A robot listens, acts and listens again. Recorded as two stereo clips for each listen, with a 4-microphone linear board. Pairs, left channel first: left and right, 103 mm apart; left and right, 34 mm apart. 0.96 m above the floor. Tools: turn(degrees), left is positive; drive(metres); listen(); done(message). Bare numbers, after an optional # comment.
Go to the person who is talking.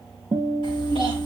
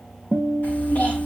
# The child speaking: about 60° left or 120° left.
turn(60)
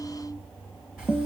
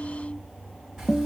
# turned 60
listen()
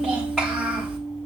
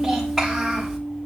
drive(1.0)
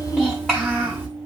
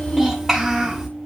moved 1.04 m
drive(1.0)
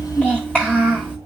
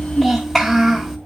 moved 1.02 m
# The child speaking is now 10° left.
turn(10)
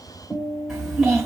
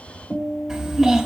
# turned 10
drive(1.0)
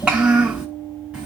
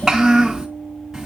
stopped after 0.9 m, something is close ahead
# The child speaking is now 10° right.
turn(-10)
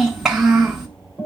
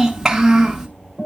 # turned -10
done("I am next to the child speaking.")